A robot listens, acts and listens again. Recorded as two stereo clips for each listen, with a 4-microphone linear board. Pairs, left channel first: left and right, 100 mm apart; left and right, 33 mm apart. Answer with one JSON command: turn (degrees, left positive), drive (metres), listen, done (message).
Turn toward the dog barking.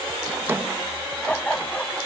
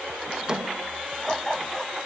{"turn": 30}
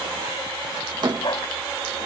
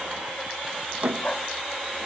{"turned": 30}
{"turn": 130}
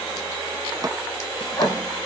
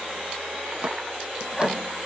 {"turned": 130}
{"listen": true}
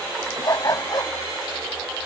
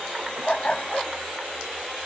{"turn": 35}
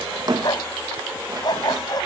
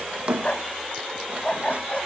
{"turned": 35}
{"turn": 40}
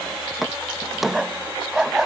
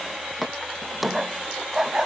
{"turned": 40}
{"done": "Facing the dog barking."}